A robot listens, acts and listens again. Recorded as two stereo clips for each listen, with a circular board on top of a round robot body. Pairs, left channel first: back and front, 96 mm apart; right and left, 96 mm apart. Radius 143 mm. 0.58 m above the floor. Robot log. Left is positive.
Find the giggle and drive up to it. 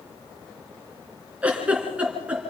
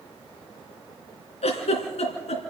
note: The giggle: 80° right.
cmd yaw -80
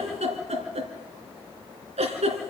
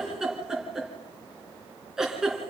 cmd fwd 1.0
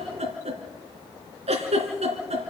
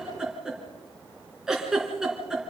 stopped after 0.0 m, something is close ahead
end: Blocked. The giggle is further on, straight ahead.